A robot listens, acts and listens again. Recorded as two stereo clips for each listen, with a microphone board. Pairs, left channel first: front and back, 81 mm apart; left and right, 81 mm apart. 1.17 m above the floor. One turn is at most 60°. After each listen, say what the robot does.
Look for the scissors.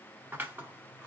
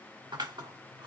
Turn 60° right.
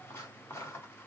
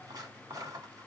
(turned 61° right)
Turn 55° right.
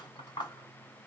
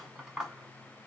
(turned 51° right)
Found it: scissors, straight ahead, 1 to 2 m away.